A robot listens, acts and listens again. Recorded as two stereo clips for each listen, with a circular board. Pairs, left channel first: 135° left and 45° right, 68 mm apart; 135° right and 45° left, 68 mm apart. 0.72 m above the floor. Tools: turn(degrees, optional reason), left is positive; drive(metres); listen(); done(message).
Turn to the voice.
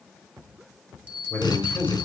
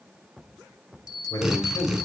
turn(degrees=-165, reason="The man speaking: 165° right.")
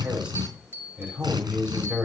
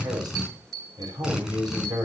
turn(degrees=30, reason="The man speaking is now 30° left.")
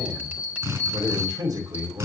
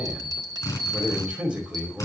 turn(degrees=-30, reason="The man speaking is now 30° right.")
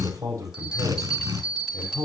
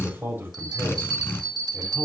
turn(degrees=-15, reason="The man speaking is now 15° right.")
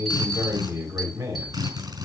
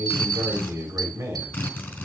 done("Found it: a man speaking, straight ahead, over 4 m away.")